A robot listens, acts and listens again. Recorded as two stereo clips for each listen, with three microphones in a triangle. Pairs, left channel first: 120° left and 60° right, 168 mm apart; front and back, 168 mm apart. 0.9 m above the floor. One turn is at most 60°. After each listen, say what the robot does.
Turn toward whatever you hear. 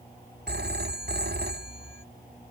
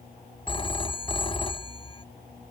Turn 60° right.
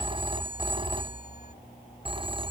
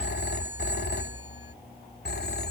Found it: a phone ringing, straight ahead.